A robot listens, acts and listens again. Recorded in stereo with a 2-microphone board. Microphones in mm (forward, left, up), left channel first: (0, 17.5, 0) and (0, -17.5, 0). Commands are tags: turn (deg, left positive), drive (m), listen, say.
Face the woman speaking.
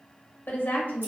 <turn deg="60"/>
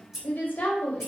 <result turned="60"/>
<turn deg="60"/>
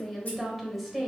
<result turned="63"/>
<say>Found it: a woman speaking, straight ahead.</say>